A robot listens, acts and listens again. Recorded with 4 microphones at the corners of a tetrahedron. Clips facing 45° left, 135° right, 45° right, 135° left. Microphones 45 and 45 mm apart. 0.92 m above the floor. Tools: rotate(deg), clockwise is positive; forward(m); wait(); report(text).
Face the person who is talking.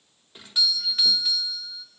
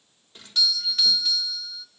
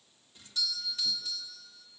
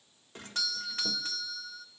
wait()
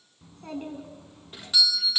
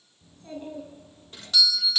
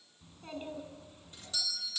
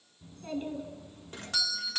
rotate(-35)
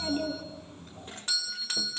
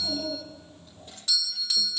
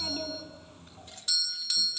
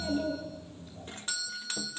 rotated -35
report("Found it: a child speaking, straight ahead, over 4 m away.")